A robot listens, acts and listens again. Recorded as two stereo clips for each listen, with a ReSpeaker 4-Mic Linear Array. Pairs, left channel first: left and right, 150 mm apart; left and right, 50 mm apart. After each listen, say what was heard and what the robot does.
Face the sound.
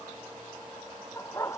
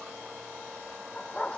The dog barking: about 20° left or 160° left. Turn 20° left.
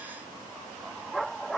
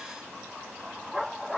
Turn 30° left.
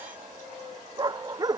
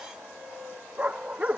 So it is at 25° right. Turn 25° right.
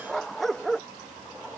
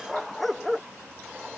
Facing the dog barking.